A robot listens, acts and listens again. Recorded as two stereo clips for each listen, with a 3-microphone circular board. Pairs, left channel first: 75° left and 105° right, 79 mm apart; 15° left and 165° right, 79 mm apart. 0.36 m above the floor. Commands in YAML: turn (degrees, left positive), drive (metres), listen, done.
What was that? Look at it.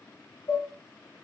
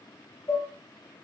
turn: 55
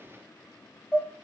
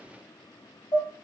done: "Facing the dishes clattering, 1 to 2 m away."